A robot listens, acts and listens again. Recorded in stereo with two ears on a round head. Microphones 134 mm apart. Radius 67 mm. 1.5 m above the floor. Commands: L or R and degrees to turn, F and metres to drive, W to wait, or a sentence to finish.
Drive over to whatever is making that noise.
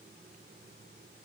W
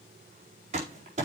R50
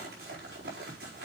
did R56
R75
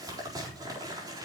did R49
R25
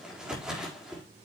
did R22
F1.0
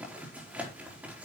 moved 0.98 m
R10
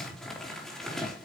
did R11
F1.0
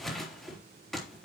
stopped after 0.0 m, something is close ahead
Something is in my way. I am facing the crumpling but have not reached it.